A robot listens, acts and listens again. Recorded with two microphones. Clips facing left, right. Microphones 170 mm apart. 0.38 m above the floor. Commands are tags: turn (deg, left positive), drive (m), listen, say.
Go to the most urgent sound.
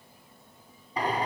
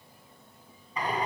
<listen/>
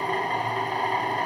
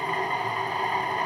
<listen/>
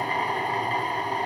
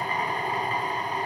<say>I can't make out anything urgent to turn to.</say>